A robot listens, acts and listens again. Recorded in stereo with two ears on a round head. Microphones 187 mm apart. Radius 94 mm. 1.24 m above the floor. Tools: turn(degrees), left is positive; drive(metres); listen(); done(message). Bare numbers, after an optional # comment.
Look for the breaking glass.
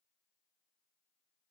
listen()
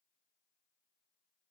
listen()
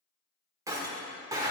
# The breaking glass: about 20° right or 160° right.
turn(-20)
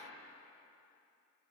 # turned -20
listen()
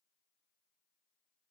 done("I heard breaking glass, but can't make it out now. It was about straight ahead or 140° right.")